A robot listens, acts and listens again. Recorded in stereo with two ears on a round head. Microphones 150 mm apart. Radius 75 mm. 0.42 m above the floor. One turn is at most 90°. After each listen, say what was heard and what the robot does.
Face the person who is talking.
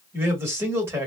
The man speaking: about 15° right or 165° right. Turn 15° right.
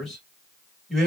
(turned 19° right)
Facing the man speaking, 1 to 2 m away.